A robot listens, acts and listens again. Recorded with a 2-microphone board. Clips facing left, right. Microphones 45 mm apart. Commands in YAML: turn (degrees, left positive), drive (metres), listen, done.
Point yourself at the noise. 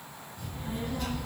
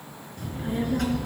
turn: -90
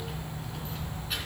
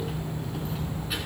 turn: -10
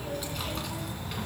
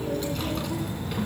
done: "Facing the child speaking, 2 to 4 m away."